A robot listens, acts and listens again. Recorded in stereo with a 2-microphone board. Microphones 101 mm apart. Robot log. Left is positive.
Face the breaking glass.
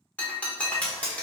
cmd yaw +30
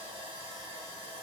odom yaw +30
cmd idle
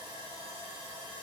end: I heard breaking glass, but can't make it out now. It was about 15° right or 135° left.